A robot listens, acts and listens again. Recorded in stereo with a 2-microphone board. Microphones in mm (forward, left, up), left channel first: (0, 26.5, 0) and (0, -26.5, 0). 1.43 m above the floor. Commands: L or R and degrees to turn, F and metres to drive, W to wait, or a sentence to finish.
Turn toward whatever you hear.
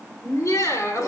L90
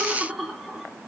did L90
Facing the laughter, 2 to 4 m away.